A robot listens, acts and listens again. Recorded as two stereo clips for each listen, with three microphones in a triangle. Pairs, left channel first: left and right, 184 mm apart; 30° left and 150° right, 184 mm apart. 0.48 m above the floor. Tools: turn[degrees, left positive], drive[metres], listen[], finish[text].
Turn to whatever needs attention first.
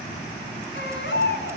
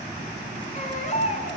Thought: The baby crying: 80° left.
Action: turn[80]
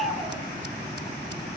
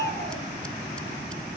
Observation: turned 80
Action: finish[Facing the baby crying, over 4 m away.]